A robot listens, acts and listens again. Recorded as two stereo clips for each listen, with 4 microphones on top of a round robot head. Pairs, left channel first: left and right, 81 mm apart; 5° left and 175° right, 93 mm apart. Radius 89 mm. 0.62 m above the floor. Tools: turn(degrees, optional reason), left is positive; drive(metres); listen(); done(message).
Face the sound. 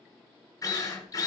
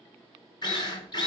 turn(degrees=45, reason="The drill: 45° left.")
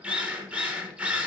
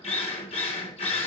turn(degrees=-15, reason="The drill is now 15° right.")
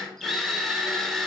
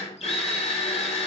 done("Found it: a drill, straight ahead.")